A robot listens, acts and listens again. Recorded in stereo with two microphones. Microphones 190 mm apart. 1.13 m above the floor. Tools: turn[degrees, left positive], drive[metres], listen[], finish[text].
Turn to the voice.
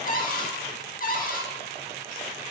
Action: listen[]
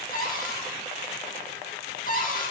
Action: listen[]
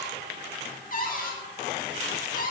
Action: finish[I can't make out anyone speaking, only a cupboard door.]